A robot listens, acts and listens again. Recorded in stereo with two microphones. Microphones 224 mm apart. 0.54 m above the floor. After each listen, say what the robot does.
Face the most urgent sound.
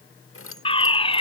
Turn 25° left.
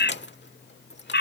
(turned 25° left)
Turn 130° left.
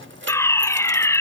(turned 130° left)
Turn 10° left.
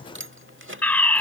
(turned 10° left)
Found it: a fire alarm, straight ahead.